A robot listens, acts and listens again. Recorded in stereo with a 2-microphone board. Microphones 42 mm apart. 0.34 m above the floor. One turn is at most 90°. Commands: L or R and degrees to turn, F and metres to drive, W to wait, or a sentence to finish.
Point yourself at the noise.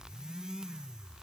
W
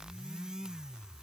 W
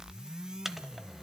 R30
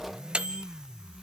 R90
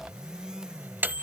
R70
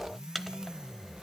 Found it: a microwave, straight ahead.